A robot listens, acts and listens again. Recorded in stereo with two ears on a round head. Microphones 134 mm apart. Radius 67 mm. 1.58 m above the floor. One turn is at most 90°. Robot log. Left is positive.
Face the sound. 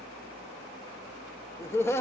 note: The laughter: about 15° left or 165° left.
cmd yaw +15
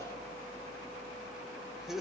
end: Facing the laughter.